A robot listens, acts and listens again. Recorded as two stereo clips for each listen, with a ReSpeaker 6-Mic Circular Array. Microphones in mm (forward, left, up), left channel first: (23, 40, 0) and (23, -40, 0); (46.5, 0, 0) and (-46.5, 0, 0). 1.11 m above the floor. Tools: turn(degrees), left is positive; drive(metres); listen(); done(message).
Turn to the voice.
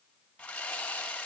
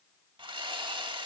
listen()
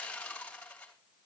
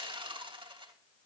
listen()
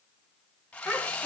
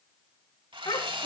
done("Found it: a child speaking, straight ahead.")